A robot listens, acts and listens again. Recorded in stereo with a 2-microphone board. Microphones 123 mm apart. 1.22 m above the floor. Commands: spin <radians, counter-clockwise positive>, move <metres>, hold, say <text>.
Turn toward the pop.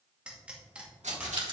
spin -0.52
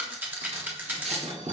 hold
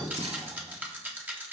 say I heard a pop, but can't make it out now. It was about 20° left or 140° right.